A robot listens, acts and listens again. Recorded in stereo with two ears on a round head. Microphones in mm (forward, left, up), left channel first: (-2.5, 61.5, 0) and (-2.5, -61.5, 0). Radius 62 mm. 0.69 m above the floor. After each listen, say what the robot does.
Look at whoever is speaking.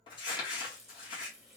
Keep listening.
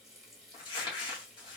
Keep listening.
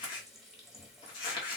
I can't make out anyone speaking, only frying and crumpling.